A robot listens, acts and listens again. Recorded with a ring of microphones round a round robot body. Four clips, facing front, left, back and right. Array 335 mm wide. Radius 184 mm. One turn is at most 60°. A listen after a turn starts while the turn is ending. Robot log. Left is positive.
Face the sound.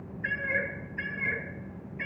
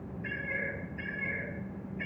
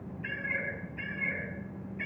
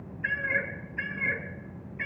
note: The cat meowing: 75° right.
cmd yaw -60
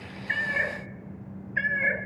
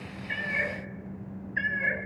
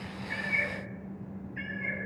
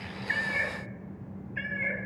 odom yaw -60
note: The cat meowing is now 10° left.
cmd yaw +10
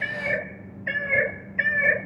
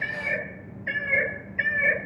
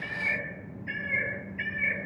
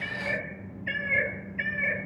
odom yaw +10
note: The cat meowing is now 25° left.
cmd yaw +25
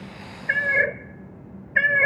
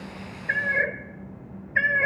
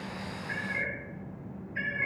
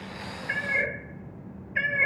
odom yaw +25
note: The cat meowing is now 15° left.
cmd yaw +15
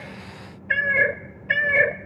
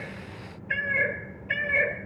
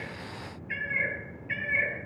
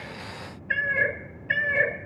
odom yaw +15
end: Facing the cat meowing.